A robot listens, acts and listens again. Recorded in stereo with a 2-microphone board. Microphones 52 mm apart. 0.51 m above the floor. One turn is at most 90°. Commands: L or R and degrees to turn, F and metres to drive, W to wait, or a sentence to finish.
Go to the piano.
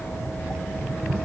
W
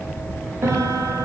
R65
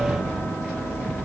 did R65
W
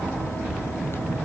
W
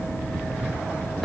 F1.0
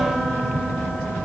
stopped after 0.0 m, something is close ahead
W
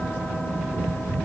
W
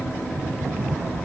I heard a piano from this way, but can't make it out now. I did not reach it.